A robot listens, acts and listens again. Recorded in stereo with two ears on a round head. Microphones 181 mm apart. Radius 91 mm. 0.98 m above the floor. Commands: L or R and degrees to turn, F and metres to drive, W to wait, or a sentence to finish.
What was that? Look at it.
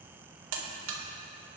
R90
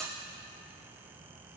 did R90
Facing the buzzer.